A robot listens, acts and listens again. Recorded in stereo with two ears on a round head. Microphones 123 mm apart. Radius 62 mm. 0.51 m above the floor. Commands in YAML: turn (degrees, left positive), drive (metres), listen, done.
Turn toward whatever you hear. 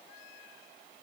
listen: true
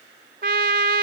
turn: -70
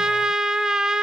done: "Found it: a trumpet, straight ahead, under 1 m away."